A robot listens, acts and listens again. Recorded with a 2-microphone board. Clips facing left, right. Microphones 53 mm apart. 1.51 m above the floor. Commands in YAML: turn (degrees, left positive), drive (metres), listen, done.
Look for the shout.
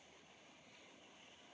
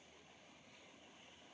listen: true
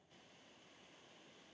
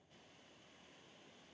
listen: true
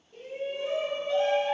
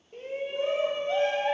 turn: -50
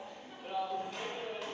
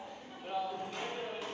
done: "Found it: a shout, straight ahead, under 1 m away."